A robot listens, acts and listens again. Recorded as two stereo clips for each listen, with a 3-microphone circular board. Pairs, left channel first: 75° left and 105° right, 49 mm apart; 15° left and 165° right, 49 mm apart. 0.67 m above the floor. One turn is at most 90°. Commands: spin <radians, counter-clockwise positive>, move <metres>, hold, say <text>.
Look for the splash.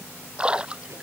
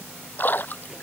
spin -0.61
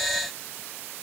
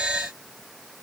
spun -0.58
say I heard a splash from this way, but can't make it out now.